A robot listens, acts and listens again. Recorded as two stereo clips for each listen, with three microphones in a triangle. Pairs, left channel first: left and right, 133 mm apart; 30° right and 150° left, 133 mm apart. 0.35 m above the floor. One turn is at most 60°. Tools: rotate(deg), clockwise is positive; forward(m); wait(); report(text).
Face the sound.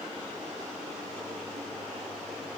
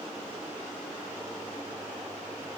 wait()
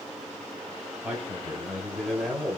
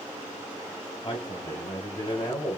report("Found it: a man speaking, straight ahead, 1 to 2 m away.")